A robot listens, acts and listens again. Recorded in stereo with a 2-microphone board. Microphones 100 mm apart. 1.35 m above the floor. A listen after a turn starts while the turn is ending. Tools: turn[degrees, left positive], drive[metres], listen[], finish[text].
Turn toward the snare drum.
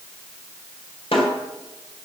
Thought: The snare drum: about 65° left or 115° left.
Action: turn[65]
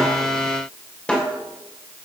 Thought: So it is at 10° left.
Action: turn[10]
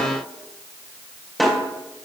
Action: finish[Found it: a snare drum, straight ahead, 2 to 4 m away.]